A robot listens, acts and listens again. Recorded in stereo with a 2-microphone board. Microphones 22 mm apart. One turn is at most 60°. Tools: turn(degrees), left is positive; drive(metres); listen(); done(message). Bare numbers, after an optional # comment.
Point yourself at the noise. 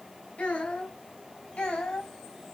turn(60)
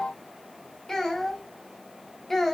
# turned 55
# So it is at 10° left.
turn(10)
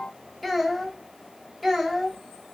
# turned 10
done("Found it: a child speaking, straight ahead.")